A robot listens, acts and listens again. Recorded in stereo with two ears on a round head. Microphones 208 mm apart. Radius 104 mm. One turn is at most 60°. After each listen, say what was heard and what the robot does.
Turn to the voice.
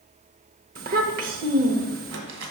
The child speaking: about 40° right or 140° right. Turn 40° right.
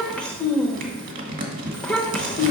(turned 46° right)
Found it: a child speaking, straight ahead.